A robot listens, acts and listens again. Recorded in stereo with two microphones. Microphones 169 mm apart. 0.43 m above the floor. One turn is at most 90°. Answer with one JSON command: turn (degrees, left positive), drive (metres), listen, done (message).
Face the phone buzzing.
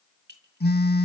{"turn": 70}
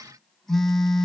{"done": "Facing the phone buzzing."}